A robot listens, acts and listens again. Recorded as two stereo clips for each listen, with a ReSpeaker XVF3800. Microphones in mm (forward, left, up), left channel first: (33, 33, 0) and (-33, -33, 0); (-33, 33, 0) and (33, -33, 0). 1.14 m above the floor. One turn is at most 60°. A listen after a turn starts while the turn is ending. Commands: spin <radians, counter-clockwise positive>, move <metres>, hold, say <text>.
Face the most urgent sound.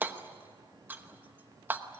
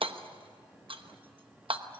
hold
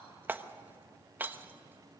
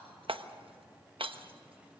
hold
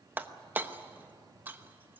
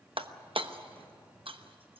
say I can't make out anything urgent to turn to.